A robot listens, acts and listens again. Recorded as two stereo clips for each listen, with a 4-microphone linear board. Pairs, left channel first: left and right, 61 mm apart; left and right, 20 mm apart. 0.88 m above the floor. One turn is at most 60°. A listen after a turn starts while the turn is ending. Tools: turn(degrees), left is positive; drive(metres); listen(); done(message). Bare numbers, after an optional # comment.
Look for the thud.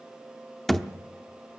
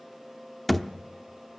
turn(30)
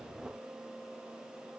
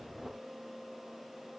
listen()
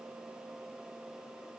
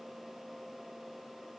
done("I heard a thud, but can't make it out now. It was about 25° right or 145° left.")